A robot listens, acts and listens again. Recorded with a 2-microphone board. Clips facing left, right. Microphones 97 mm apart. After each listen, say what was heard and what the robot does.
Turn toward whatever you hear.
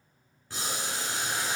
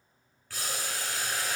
The boiling: about 20° left or 160° left. Turn 20° left.
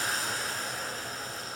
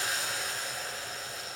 So it is at 140° left. Turn 140° left.
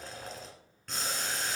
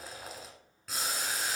Facing the boiling.